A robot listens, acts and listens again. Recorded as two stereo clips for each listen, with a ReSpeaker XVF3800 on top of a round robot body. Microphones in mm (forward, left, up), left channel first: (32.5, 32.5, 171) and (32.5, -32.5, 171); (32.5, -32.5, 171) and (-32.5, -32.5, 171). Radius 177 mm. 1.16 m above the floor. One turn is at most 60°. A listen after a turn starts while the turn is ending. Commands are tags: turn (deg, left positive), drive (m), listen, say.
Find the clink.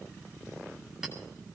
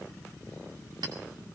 <turn deg="-60"/>
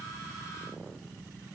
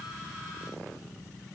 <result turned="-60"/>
<turn deg="-60"/>
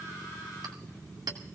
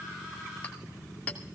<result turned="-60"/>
<turn deg="-60"/>
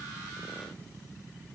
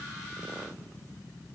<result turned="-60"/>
<listen/>
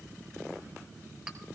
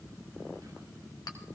<listen/>
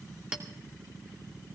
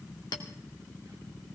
<turn deg="-15"/>
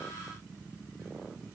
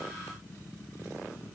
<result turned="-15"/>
<listen/>
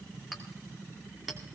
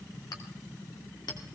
<say>Facing the clink.</say>